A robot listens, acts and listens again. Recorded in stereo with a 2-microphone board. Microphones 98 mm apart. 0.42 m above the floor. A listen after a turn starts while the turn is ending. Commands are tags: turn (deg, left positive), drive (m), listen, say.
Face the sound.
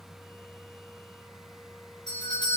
<turn deg="55"/>
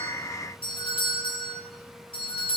<turn deg="70"/>
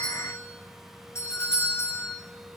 <turn deg="30"/>
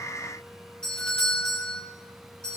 <say>Found it: a doorbell, straight ahead, over 4 m away.</say>